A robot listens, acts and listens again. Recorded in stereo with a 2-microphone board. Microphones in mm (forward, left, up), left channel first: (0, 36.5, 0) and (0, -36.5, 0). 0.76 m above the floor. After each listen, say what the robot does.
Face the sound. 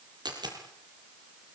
Turn 75° right.
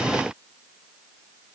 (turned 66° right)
Keep listening.
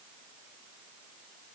I heard a dropped coin, but can't make it out now. It was about 10° right or 40° right.